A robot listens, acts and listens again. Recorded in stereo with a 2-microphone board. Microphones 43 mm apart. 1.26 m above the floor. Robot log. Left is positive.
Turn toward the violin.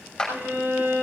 note: The violin: about 50° right or 130° right.
cmd yaw -50
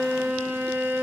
note: So it is at 80° right.
cmd yaw -80
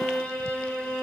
note: The violin is now 20° left.
cmd yaw +20
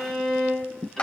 end: Found it: a violin, straight ahead.